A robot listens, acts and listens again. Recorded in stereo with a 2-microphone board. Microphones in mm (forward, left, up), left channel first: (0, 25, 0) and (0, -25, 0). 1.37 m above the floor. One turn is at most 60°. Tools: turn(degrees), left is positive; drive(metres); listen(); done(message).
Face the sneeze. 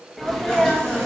turn(degrees=30)
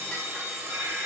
listen()
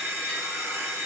done("I heard a sneeze, but can't make it out now. It was about 30° right or 150° left.")